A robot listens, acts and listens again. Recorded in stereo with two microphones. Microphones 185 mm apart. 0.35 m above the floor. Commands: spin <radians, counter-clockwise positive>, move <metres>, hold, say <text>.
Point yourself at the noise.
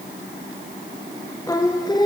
spin 0.35
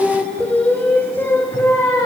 spin 0.52
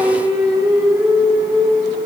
spin -0.17
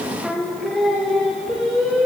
say Facing the singing, over 4 m away.